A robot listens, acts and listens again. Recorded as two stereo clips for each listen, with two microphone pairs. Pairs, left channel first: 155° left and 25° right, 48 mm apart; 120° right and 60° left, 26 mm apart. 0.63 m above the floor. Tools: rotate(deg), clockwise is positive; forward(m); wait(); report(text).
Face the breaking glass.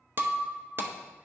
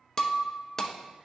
rotate(55)
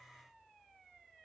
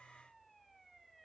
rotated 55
report("Facing where the breaking glass came from. I can't hear it now.")